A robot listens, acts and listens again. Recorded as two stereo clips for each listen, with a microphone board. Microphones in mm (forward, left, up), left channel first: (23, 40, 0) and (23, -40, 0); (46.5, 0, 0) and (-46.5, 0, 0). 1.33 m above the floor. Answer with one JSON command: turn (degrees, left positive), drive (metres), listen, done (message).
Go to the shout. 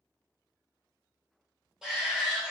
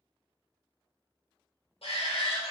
{"drive": 1.0}
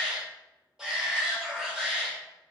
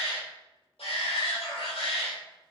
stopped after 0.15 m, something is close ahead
{"turn": -10}
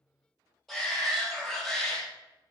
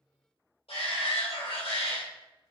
{"done": "Blocked. The shout is further on, straight ahead."}